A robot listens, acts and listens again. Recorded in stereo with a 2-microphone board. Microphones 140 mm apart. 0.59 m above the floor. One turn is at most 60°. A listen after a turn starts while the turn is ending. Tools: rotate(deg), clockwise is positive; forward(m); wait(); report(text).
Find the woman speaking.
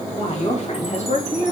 rotate(-55)
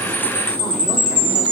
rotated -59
wait()
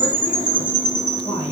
wait()
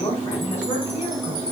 rotate(-50)
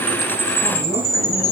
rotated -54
wait()
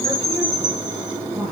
wait()
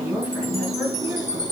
report("Found it: a woman speaking, straight ahead, over 4 m away.")